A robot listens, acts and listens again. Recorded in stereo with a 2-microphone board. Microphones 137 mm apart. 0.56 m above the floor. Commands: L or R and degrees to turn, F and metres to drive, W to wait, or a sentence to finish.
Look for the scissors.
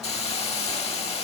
W
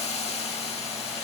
W
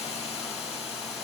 I can't make out scissors to turn to.